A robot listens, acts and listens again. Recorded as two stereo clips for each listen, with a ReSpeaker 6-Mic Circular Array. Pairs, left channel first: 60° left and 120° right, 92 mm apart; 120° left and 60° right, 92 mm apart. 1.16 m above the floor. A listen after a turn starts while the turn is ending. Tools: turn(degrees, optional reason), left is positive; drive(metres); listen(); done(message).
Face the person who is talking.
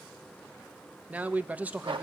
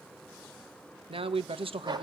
turn(degrees=-45, reason="The man speaking: 45° right.")
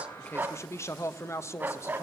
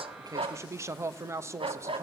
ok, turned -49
done("Facing the man speaking, 1 to 2 m away.")